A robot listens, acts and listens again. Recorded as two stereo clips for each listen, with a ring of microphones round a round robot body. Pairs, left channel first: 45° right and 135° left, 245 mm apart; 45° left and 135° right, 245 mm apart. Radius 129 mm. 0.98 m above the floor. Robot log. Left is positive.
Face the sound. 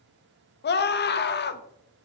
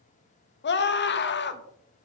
end: Facing the scream, 1 to 2 m away.